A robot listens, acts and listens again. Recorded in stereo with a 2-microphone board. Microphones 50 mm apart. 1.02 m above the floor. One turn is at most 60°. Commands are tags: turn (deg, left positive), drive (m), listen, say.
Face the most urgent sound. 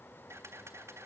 <listen/>
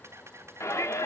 <turn deg="60"/>
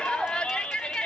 <turn deg="20"/>
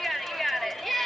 <say>Found it: a shout, straight ahead.</say>